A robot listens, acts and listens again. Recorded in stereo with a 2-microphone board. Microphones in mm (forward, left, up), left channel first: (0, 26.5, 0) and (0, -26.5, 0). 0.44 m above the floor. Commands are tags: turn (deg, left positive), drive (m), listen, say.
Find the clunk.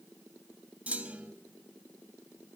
<turn deg="-25"/>
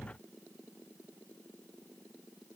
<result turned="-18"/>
<listen/>
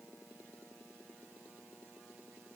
<say>I heard a clunk, but can't make it out now. It was about 10° right or 135° right.</say>